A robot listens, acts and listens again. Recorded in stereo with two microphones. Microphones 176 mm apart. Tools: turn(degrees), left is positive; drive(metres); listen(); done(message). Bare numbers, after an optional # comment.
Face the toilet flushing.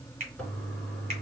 turn(30)
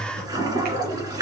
# So it is at 20° right.
turn(-20)
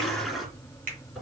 done("Facing the toilet flushing.")